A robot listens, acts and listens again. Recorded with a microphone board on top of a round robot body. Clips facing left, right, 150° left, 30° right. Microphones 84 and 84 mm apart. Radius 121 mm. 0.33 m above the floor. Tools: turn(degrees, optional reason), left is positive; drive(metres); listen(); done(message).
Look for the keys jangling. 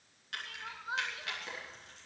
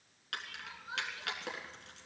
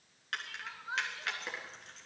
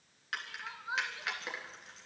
turn(degrees=-115, reason="The keys jangling: 115° right.")
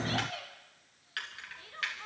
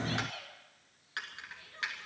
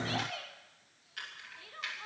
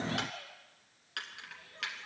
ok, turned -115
turn(degrees=-20, reason="The keys jangling is now 20° right.")
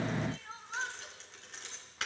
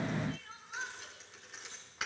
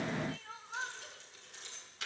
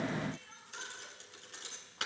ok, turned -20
done("Found it: keys jangling, straight ahead.")